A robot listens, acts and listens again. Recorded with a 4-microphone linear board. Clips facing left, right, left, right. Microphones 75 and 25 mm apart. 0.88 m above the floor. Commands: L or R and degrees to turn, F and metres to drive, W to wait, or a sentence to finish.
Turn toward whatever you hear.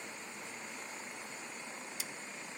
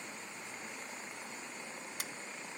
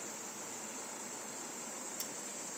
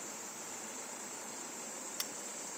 R50
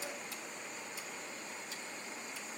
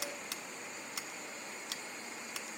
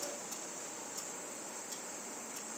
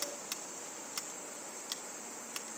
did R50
R75
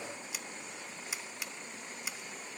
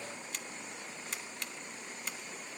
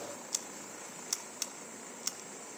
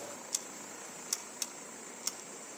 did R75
Found it: scissors, straight ahead.